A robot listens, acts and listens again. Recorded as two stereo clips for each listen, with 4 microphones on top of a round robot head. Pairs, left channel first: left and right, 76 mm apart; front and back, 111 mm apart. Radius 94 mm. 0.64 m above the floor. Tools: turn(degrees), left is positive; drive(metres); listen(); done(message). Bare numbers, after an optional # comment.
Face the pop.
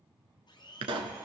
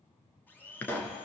# The pop: 80° right.
turn(-80)
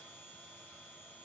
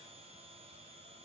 done("I heard a pop from this way, but can't make it out now.")